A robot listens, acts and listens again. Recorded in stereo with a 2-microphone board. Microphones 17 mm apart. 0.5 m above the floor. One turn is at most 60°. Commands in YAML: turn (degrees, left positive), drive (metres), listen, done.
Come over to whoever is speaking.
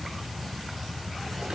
listen: true
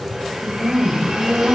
turn: -20
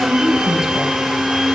turn: -60
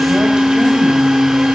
turn: -60
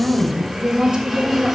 turn: -60
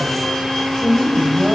turn: -20
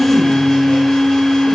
listen: true
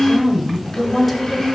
drive: 1.0
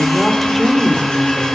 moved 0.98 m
drive: 1.0
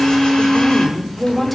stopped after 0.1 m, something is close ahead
done: "Arrived at the woman speaking, straight ahead."